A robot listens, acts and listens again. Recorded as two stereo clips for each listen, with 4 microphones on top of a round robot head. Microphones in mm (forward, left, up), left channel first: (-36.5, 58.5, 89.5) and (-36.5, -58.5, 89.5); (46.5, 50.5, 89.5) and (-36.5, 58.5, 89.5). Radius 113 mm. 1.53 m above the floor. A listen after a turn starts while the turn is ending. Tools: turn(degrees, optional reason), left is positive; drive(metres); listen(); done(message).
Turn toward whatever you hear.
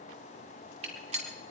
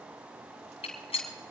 turn(degrees=-40, reason="The gunshot: 40° right.")
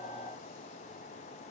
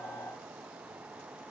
done("I heard a gunshot from this way, but can't make it out now.")